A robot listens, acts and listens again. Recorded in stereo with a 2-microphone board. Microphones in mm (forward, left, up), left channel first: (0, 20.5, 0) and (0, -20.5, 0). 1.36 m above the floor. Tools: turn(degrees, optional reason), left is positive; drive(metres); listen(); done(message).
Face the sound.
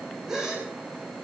turn(degrees=-30)
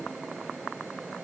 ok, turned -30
listen()
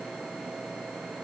done("I heard a gasp, but can't make it out now. It was about 20° left or 140° right.")